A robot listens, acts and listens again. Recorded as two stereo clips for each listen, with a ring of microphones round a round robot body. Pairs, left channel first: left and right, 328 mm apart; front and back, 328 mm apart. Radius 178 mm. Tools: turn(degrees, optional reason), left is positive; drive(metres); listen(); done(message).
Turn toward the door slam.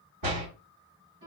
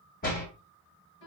turn(degrees=-60, reason="The door slam: 60° right.")
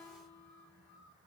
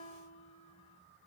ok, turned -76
turn(degrees=15, reason="Nothing new. It was at 15° left.")
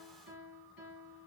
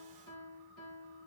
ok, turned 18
done("I heard a door slam from this way, but can't make it out now.")